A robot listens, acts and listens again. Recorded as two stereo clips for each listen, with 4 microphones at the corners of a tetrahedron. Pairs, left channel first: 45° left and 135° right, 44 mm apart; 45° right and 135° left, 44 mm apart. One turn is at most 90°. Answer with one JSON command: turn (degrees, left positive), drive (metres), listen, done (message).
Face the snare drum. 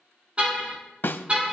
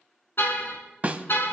{"turn": 80}
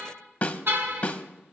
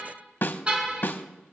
{"turn": -10}
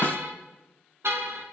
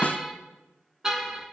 {"listen": true}
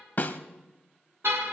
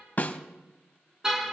{"done": "Facing the snare drum, under 1 m away."}